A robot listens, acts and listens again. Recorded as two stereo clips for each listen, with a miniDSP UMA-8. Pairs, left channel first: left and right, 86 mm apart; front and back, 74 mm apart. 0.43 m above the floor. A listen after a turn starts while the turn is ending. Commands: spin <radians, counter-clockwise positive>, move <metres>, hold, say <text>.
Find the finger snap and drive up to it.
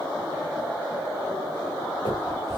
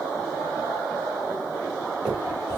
spin 1.66
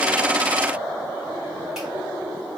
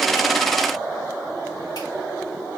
hold
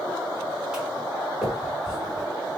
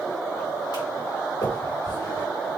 spin -0.17
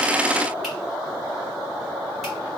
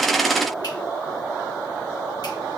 hold
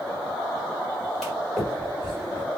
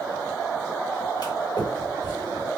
move 1.0
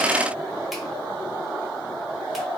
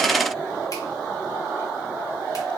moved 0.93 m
hold
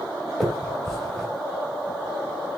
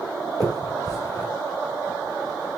move 1.0
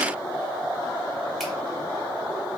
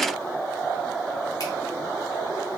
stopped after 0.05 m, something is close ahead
hold
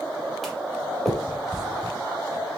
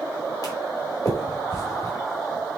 say I am next to the finger snap.